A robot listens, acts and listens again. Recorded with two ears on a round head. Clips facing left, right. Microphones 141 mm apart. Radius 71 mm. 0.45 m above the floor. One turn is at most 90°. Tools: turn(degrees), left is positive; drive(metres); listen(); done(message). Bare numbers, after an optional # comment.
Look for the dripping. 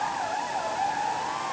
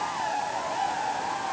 listen()
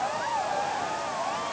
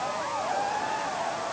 listen()
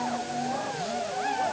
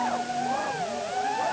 done("I can't make out dripping to turn to.")